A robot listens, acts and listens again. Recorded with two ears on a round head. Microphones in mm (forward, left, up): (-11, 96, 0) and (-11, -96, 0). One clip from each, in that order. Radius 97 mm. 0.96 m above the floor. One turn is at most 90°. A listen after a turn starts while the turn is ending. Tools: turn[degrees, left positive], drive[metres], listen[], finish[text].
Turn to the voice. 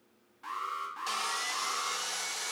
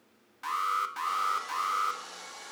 Action: listen[]
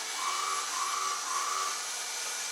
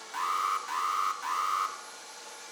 Action: listen[]
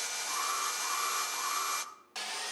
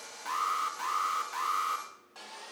Action: finish[I can't make out anyone speaking, only sawing and an alarm.]